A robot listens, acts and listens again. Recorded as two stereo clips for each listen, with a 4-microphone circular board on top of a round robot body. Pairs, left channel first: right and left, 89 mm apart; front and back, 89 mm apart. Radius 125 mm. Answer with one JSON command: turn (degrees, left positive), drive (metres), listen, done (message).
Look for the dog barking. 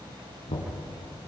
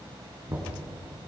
{"listen": true}
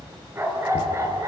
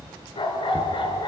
{"turn": 35}
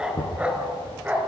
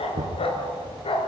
{"turn": 20}
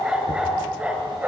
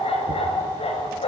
{"turn": 15}
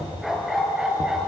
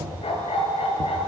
{"turn": 10}
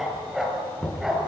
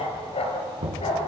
{"done": "Facing the dog barking, 2 to 4 m away."}